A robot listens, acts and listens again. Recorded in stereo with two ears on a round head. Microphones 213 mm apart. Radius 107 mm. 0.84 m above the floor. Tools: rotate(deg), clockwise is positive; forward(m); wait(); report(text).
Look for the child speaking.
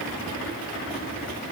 wait()
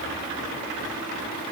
wait()
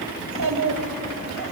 rotate(90)
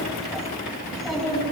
report("Found it: a child speaking, straight ahead.")